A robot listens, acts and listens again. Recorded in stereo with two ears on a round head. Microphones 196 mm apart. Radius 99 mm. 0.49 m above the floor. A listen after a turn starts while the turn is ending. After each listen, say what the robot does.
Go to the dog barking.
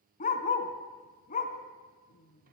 Turn 35° left.
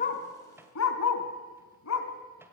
Turn 110° left.
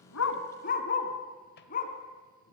Turn 40° left.
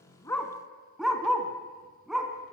Drive 1.0 m forward.
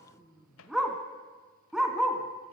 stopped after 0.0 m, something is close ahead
Blocked. The dog barking is further on, straight ahead.